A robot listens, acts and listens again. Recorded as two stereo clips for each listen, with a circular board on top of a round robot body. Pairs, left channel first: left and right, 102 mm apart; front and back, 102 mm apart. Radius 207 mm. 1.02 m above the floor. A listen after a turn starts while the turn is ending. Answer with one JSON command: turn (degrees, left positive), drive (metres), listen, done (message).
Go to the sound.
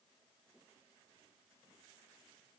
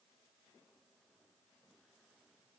{"listen": true}
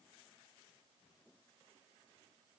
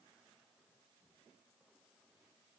{"listen": true}
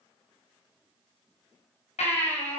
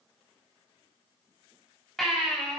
{"turn": 85}
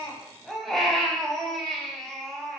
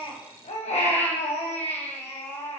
{"drive": 1.0}
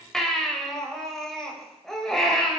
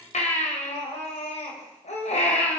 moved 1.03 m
{"drive": 1.0}
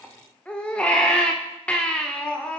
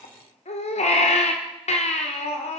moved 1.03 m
{"turn": 10}
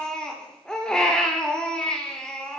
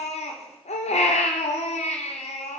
{"drive": 1.0}
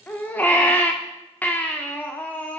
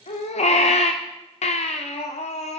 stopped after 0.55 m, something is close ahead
{"turn": 15}
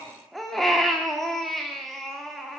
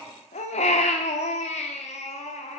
{"done": "I am next to the baby crying."}